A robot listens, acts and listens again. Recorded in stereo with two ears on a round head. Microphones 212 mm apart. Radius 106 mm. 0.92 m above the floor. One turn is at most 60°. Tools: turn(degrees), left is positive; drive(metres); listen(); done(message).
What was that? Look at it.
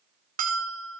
turn(degrees=-35)
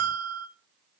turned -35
turn(degrees=-60)
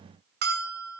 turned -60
turn(degrees=-40)
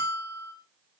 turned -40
turn(degrees=25)
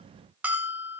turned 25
done("Found it: a bell, straight ahead, 2 to 4 m away.")